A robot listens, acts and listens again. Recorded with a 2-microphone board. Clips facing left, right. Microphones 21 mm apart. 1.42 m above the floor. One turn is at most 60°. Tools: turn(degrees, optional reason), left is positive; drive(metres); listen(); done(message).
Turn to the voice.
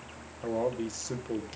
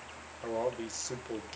turn(degrees=-30)
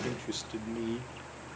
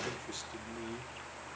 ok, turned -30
turn(degrees=30, reason="So it is at 30° left.")
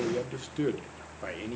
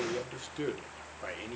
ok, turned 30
done("Facing the man speaking, 1 to 2 m away.")